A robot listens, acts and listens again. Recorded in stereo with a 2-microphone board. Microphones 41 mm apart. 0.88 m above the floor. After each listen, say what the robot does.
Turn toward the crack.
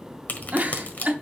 Turn 50° left.
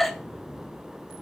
Keep listening.
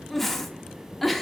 I heard a crack, but can't make it out now. It was about straight ahead or 80° left.